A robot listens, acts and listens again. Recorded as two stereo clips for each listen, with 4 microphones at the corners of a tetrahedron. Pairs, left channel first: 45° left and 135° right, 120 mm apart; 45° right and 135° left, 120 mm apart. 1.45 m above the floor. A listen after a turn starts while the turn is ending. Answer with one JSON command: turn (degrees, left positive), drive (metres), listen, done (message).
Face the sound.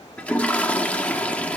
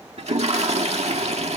{"turn": 120}
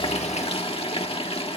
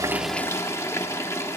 {"turn": 20}
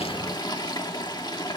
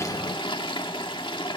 {"done": "Found it: a toilet flushing, straight ahead."}